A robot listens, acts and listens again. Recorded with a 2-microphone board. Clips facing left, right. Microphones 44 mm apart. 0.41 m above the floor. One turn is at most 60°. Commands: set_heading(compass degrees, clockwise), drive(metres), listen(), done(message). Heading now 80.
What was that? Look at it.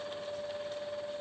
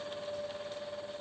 listen()
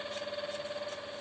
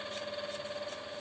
listen()
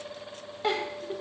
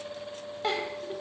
set_heading(50)
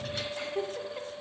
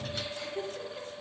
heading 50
set_heading(350)
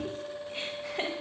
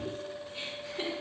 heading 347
set_heading(287)
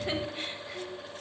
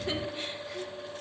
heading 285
set_heading(265)
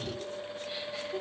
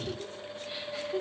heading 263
done("Facing the giggle.")